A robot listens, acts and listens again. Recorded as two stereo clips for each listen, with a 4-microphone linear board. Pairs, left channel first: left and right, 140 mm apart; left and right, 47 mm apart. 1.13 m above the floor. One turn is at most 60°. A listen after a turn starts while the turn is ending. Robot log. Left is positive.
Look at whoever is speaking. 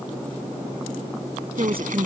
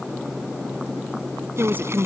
note: The woman speaking: about 40° right or 140° right.
cmd yaw -40
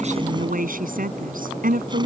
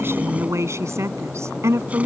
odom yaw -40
note: So it is at 100° right.
cmd yaw -60
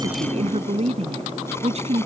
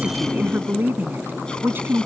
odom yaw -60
note: The woman speaking is now 45° right.
cmd yaw -45
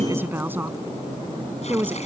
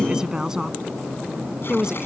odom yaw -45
note: The woman speaking is now 15° right.
cmd yaw -15
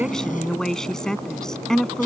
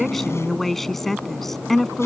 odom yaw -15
end: Found it: a woman speaking, straight ahead.